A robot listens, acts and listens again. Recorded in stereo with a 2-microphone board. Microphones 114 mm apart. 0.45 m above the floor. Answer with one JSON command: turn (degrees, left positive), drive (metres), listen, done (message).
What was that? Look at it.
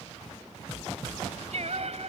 {"turn": -65}
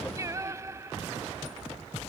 {"turn": -25}
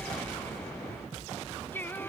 {"turn": 15}
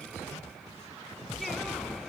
{"listen": true}
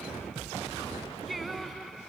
{"done": "Facing the singing."}